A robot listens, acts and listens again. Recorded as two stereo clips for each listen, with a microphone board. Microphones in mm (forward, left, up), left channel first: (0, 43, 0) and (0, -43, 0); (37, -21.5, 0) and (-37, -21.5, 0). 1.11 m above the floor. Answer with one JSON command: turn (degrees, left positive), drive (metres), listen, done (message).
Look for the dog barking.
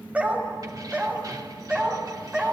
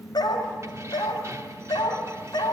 {"turn": -15}
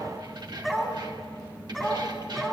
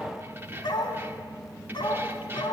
{"done": "Facing the dog barking, over 4 m away."}